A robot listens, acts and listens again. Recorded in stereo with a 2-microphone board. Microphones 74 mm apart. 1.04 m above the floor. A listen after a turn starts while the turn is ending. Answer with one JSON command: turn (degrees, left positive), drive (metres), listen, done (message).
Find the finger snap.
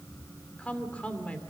{"listen": true}
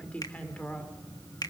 {"turn": 60}
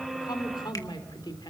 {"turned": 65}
{"listen": true}
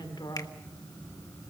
{"listen": true}
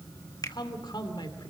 {"turn": 55}
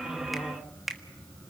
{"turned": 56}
{"done": "Facing the finger snap, 1 to 2 m away."}